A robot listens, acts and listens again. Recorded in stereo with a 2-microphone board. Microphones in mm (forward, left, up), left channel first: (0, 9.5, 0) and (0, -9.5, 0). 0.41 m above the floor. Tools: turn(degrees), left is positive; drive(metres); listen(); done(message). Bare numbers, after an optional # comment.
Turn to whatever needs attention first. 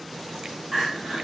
# The crying: about 20° right or 160° right.
turn(-20)
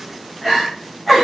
done("Found it: crying, straight ahead.")